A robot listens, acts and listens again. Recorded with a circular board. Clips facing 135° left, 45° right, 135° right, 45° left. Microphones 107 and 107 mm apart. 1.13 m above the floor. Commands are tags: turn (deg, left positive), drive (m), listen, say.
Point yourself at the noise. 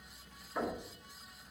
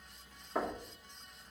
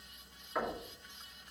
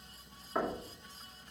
<turn deg="-25"/>
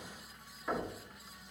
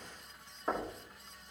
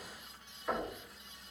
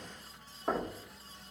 <say>Facing the knocking, 2 to 4 m away.</say>